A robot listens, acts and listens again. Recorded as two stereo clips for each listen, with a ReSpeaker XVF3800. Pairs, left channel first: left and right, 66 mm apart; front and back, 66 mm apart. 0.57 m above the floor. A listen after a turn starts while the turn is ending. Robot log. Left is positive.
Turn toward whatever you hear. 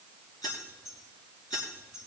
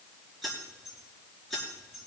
note: The keys jangling: 80° left.
cmd yaw +80
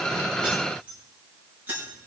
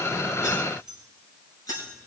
note: The keys jangling is now 30° right.
cmd yaw -30
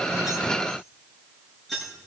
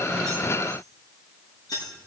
end: Facing the keys jangling, over 4 m away.